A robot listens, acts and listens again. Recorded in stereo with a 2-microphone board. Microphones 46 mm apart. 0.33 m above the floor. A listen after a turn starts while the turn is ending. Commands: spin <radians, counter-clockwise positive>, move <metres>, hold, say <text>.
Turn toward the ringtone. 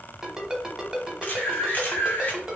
spin -0.52
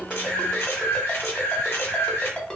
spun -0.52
spin 0.35
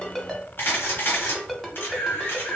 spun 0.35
say Facing the ringtone, under 1 m away.